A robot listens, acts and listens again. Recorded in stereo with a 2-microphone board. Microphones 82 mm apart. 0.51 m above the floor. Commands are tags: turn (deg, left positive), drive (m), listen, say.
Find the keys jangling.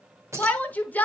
<turn deg="-30"/>
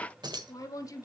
<turn deg="-115"/>
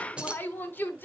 <turn deg="-15"/>
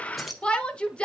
<say>Facing the keys jangling.</say>